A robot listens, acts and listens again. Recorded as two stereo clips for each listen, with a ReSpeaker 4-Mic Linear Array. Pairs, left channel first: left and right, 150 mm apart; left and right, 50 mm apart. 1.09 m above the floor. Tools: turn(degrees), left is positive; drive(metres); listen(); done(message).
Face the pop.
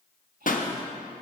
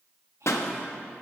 turn(degrees=65)
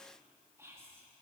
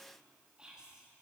listen()
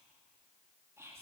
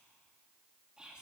done("I heard a pop, but can't make it out now. It was about straight ahead or 50° left.")